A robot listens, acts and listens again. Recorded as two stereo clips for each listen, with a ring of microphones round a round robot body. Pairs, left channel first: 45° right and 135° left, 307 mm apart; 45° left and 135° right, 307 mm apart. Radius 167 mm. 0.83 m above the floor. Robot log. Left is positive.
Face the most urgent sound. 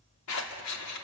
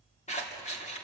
cmd idle
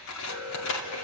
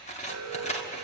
note: The alarm: 90° right.
cmd yaw -90
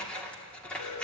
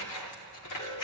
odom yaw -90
note: The alarm is now 25° right.
cmd yaw -25
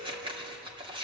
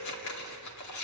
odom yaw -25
cmd idle
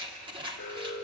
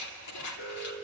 end: Found it: an alarm, straight ahead, 1 to 2 m away.